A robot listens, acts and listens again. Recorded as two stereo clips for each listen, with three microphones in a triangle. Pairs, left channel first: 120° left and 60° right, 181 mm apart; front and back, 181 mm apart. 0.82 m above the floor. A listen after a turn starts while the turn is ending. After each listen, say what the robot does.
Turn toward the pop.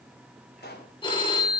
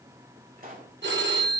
Turn 145° left.
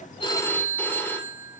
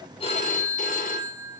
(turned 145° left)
Facing where the pop came from. I can't hear it now.